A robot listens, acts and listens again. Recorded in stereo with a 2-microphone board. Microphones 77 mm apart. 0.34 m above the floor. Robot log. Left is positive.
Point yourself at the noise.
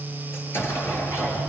note: The explosion: about 30° left or 150° left.
cmd yaw +30
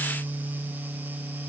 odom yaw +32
cmd idle
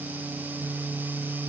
end: I heard an explosion, but can't make it out now. It was about straight ahead or 115° left.